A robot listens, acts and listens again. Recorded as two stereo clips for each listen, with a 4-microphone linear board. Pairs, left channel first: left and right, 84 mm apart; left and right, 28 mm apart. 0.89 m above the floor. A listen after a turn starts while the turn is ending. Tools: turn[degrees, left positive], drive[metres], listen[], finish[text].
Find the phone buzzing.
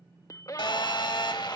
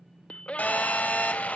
Thought: The phone buzzing: about 70° left or 110° left.
Action: turn[70]
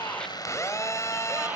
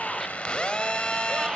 Thought: So it is at 40° left.
Action: turn[40]
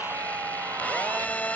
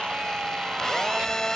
Thought: The phone buzzing is now 20° left.
Action: turn[20]
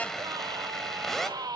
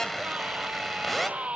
Action: finish[Found it: a phone buzzing, straight ahead, 1 to 2 m away.]